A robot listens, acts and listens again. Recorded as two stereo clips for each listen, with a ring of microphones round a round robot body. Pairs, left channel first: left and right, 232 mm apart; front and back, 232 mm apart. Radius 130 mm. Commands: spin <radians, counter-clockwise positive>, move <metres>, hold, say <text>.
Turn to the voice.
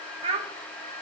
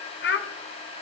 spin -0.44
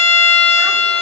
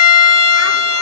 hold
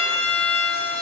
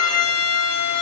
hold
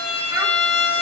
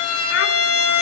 say I heard a child speaking from this way, but can't make it out now.